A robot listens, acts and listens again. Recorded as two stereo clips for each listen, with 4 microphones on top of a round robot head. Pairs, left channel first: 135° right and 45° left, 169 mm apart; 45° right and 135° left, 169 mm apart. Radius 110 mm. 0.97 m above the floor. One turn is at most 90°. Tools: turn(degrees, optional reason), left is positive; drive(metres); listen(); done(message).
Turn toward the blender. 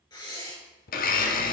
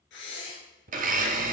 turn(degrees=90, reason="The blender: straight behind.")
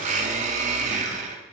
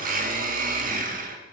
turn(degrees=90, reason="The blender is now 95° left.")
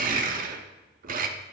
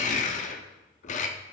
done("Found it: a blender, straight ahead.")